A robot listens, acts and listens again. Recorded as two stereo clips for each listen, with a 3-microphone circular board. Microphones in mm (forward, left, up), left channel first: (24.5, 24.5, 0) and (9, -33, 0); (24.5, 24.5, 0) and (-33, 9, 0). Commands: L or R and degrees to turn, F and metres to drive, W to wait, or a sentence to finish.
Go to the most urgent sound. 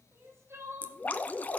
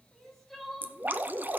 R70
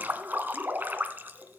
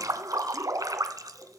W
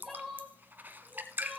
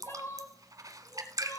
R10
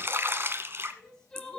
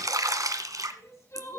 F1.0
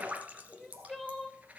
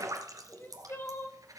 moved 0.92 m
F1.0
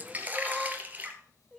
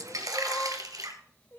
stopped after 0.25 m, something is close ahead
I am next to the crying.